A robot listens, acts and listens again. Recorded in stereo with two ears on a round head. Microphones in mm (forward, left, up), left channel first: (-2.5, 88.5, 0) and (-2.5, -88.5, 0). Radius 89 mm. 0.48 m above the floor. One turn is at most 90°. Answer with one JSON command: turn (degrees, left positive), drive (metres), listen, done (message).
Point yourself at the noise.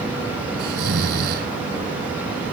{"turn": -50}
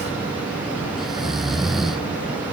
{"done": "Facing the snoring."}